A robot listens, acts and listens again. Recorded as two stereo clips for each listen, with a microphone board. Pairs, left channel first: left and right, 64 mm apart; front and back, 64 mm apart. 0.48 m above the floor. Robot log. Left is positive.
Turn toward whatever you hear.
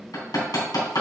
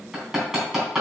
note: The hammering: 95° left.
cmd yaw +95
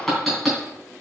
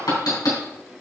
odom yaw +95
end: Facing the hammering, 2 to 4 m away.